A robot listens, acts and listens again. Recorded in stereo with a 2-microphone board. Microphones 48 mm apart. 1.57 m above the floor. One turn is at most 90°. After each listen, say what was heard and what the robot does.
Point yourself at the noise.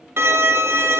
The violin: about 60° right or 120° right. Turn 60° right.
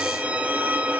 So it is at 35° right. Turn 35° right.
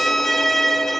Found it: a violin, straight ahead.